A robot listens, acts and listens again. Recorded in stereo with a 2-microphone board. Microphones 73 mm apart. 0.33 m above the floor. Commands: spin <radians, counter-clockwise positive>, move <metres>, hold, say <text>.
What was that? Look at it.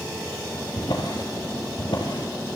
spin 1.31
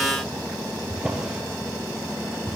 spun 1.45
spin -0.17
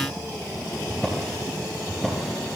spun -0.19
say Facing the drawer.